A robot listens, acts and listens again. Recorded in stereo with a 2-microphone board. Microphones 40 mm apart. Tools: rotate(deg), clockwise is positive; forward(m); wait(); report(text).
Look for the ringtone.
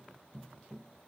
wait()
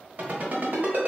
rotate(50)
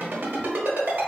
rotate(80)
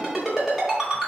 rotate(10)
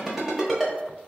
report("Facing the ringtone, 1 to 2 m away.")